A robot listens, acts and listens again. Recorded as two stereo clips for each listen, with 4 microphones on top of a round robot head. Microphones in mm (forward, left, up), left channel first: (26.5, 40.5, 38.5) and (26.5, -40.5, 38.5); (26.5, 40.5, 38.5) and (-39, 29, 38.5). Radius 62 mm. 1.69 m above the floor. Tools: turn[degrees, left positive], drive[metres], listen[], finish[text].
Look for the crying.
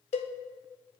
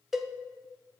Action: listen[]
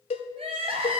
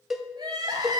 Thought: The crying: 120° right.
Action: turn[-120]
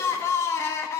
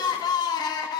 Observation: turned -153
Thought: The crying is now 30° left.
Action: turn[30]
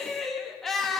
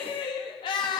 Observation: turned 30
Action: finish[Found it: crying, straight ahead, 1 to 2 m away.]